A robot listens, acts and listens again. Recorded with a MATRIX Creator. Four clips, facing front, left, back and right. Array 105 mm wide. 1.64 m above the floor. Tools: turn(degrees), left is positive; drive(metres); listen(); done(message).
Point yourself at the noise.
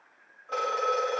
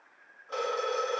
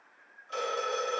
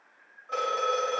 turn(degrees=-10)
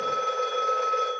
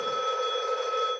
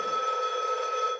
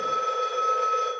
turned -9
done("Facing the phone ringing.")